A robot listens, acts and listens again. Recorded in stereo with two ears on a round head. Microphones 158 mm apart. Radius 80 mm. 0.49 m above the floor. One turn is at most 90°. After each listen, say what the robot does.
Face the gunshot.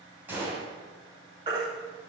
Turn 30° right.
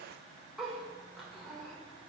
Keep listening.
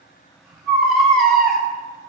I heard a gunshot, but can't make it out now. It was about 20° left or 140° right.